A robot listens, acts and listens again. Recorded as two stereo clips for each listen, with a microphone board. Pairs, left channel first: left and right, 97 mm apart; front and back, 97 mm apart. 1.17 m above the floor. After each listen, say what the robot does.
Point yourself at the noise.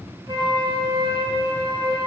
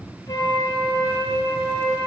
Turn 55° right.
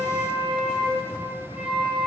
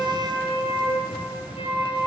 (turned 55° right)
Turn 10° right.
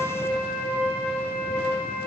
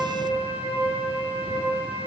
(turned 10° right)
Found it: a flute, straight ahead, over 4 m away.